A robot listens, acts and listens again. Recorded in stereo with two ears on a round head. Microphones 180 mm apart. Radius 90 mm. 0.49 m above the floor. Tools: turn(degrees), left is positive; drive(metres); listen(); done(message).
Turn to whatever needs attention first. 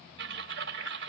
listen()
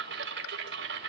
listen()
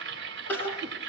turn(degrees=30)
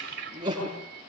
turn(degrees=-25)
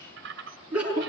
done("Facing the crying.")